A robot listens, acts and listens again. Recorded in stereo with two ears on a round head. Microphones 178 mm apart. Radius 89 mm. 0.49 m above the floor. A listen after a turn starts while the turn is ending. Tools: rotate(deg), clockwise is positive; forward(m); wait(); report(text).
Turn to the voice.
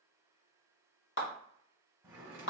wait()
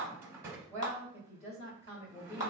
rotate(-35)
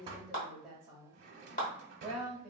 report("Found it: a woman speaking, straight ahead, 1 to 2 m away.")